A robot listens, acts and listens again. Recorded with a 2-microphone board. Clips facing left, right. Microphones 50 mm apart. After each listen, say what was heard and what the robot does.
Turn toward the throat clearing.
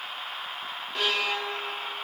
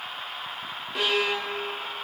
Keep listening.
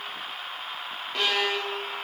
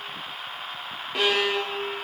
Keep listening.
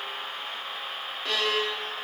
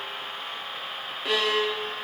I can't make out throat clearing to turn to.